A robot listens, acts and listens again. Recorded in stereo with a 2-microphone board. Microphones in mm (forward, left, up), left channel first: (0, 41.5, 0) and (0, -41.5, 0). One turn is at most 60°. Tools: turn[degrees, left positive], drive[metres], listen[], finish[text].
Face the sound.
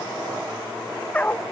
Thought: The dog barking: about 15° left or 165° left.
Action: turn[15]
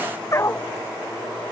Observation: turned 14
Thought: The dog barking: about 30° left or 150° left.
Action: turn[30]
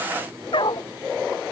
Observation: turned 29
Thought: So it is at 120° left.
Action: turn[60]
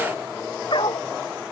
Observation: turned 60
Thought: The dog barking is now 60° left.
Action: turn[60]
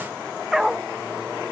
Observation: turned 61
Action: finish[Facing the dog barking.]